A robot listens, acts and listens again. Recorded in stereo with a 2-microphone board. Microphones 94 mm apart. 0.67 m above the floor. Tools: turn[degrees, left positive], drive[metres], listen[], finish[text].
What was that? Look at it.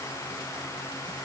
Action: listen[]
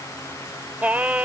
Thought: The singing: about 15° right or 165° right.
Action: turn[-15]
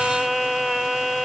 Action: finish[Found it: singing, straight ahead.]